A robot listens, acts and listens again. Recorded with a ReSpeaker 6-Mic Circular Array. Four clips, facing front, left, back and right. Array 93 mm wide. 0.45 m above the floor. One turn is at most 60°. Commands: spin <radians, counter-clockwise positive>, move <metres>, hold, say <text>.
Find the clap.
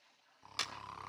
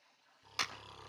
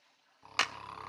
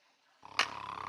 spin -1.05
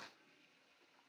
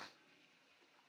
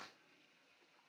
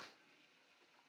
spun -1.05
spin -1.05
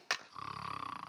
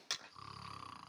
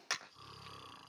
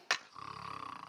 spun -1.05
spin -1.05
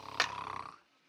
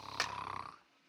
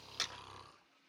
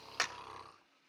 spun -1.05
say Facing the clap.